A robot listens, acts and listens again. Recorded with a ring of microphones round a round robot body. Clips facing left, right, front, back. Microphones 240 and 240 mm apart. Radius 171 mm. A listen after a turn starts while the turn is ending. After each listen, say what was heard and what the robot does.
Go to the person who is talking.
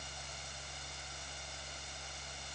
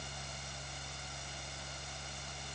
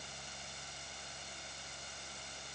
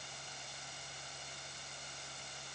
Keep listening.
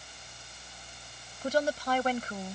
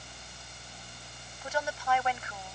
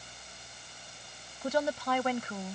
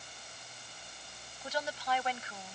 The woman speaking: 40° left. Turn 40° left.
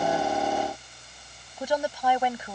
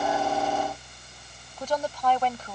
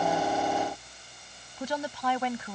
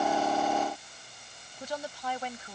The woman speaking is now 10° left. Turn 10° left.
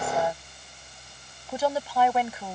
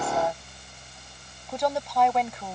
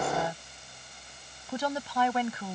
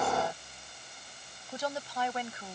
Drive 1.0 m forward.
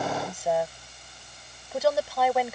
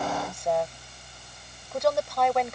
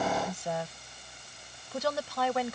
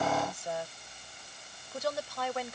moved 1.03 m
Drive 1.0 m forward.
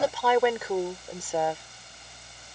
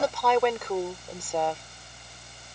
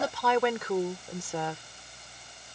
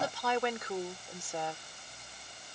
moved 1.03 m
Drive 1.0 m forward.
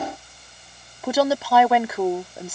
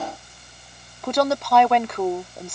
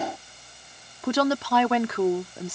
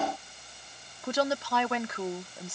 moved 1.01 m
Drive 1.0 m forward.
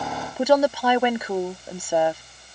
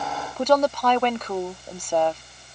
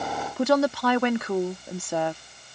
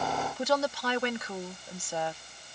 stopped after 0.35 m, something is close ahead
The woman speaking is now 10° left. Turn 10° left.
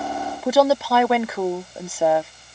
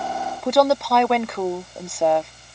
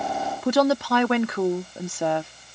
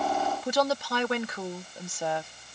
I am next to the woman speaking.